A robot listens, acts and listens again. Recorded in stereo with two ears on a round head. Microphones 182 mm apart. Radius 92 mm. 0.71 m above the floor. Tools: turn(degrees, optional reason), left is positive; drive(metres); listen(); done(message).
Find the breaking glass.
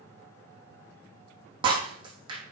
turn(degrees=-25, reason="The breaking glass: about 25° right or 155° right.")
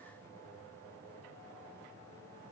listen()
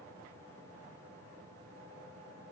done("I heard breaking glass, but can't make it out now. It was about straight ahead or 130° right.")